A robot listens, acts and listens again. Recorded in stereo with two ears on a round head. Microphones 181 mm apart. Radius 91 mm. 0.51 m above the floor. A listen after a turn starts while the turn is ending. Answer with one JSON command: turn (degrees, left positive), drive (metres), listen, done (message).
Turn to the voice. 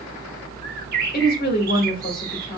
{"turn": 45}
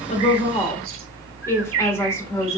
{"turn": 15}
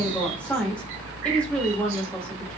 {"done": "Found it: a woman speaking, straight ahead."}